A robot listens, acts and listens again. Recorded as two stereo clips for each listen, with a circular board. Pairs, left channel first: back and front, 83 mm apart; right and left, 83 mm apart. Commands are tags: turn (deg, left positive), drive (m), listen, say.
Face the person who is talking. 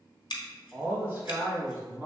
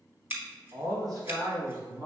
<turn deg="55"/>
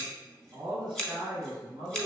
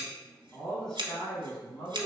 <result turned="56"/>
<turn deg="-15"/>
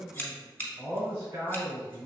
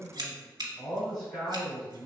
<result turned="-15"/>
<say>Facing the man speaking, 2 to 4 m away.</say>